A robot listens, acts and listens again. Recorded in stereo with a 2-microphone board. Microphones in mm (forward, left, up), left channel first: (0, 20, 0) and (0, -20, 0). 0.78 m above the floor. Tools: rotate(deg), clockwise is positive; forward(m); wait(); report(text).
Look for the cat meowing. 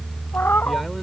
rotate(-70)
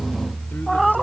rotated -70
report("Found it: a cat meowing, straight ahead.")